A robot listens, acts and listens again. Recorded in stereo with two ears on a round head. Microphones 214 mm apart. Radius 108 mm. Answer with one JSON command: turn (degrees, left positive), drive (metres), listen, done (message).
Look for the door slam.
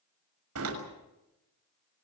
{"turn": -65}
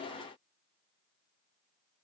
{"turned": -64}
{"listen": true}
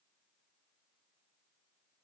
{"done": "I heard a door slam, but can't make it out now. It was about straight ahead or 55° right."}